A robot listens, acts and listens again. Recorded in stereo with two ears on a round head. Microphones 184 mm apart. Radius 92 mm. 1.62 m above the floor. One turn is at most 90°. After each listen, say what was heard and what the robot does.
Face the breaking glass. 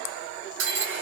Turn 90° right.
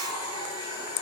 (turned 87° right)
I heard breaking glass from this way, but can't make it out now.